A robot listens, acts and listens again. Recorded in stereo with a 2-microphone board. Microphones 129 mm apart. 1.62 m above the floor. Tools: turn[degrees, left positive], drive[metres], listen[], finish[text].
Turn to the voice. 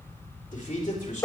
Action: turn[90]
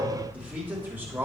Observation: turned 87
Thought: So it is at 15° right.
Action: turn[-15]
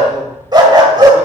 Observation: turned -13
Action: listen[]
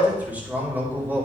Thought: The man speaking is now 15° right.
Action: turn[-15]
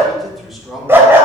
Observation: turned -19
Action: finish[Facing the man speaking.]